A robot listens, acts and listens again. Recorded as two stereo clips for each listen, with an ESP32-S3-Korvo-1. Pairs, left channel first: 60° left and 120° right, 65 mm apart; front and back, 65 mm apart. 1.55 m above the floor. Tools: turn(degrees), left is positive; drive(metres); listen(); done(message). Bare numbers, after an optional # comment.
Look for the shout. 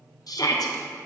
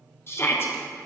# The shout: 50° left.
turn(50)
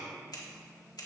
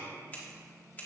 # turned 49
listen()
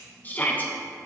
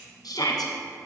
done("Facing the shout, under 1 m away.")